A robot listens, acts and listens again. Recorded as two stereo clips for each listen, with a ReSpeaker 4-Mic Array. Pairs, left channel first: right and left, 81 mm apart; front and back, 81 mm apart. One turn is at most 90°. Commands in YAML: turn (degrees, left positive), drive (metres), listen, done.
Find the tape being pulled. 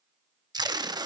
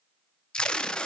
turn: 75
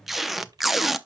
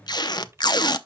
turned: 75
done: "Found it: tape being pulled, straight ahead, under 1 m away."